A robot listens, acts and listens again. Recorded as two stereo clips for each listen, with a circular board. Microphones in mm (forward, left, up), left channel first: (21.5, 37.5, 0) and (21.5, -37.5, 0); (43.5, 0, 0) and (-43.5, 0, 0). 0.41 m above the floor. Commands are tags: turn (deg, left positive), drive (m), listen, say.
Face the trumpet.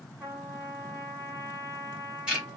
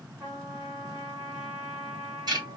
<turn deg="-130"/>
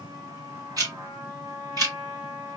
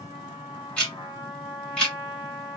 <turn deg="-40"/>
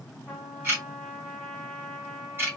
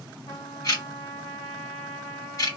<say>Found it: a trumpet, straight ahead, 1 to 2 m away.</say>